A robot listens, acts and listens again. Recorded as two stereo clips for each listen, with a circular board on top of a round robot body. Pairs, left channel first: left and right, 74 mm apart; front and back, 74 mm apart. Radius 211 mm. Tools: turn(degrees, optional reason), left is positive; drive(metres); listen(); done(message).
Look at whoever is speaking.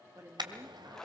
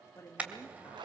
turn(degrees=-60, reason="The woman speaking: 60° right.")
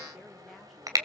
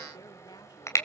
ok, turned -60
listen()
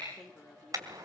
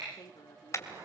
done("Facing the woman speaking.")